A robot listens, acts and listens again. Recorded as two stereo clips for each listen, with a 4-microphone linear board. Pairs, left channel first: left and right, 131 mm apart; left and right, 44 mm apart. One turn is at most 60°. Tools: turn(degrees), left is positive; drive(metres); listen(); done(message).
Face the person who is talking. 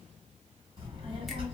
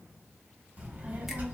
turn(degrees=-45)
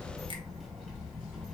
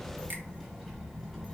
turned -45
done("Facing the child speaking, 1 to 2 m away.")